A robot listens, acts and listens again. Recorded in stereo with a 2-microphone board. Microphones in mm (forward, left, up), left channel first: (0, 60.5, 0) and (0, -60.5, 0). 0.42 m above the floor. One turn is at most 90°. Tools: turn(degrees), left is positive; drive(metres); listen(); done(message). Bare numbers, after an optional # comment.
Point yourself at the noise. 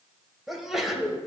turn(-30)
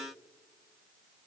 listen()
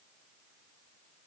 done("I heard a sneeze, but can't make it out now. It was about 25° left or 145° right.")